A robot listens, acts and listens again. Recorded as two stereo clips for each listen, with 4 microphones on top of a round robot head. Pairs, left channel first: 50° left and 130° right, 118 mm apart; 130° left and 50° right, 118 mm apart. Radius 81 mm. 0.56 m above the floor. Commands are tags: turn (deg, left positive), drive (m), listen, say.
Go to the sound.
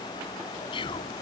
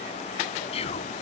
<turn deg="95"/>
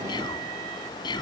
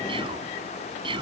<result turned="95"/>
<drive m="1.0"/>
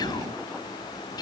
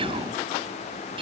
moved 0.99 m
<drive m="1.0"/>
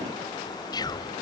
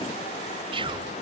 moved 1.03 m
<drive m="1.0"/>
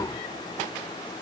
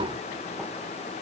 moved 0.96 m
<turn deg="-10"/>
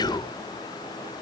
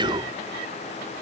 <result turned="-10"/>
<drive m="1.0"/>
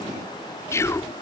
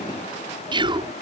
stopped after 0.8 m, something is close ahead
<turn deg="-15"/>
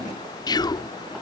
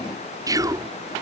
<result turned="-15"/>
<say>I am next to the whispering.</say>